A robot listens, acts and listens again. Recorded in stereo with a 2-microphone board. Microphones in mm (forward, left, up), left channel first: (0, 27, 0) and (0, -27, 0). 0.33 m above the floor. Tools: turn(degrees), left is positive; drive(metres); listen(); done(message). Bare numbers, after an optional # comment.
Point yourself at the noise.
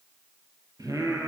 turn(-90)
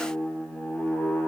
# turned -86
# So it is at 20° left.
turn(20)
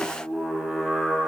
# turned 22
done("Facing the singing, over 4 m away.")